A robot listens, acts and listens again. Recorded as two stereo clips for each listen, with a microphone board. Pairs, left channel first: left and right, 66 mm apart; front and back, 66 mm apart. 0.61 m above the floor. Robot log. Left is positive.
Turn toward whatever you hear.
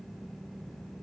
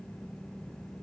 cmd idle
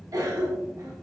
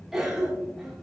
note: The cough: 100° right.
cmd yaw -100
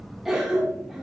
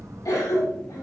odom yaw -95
end: Found it: a cough, straight ahead, 1 to 2 m away.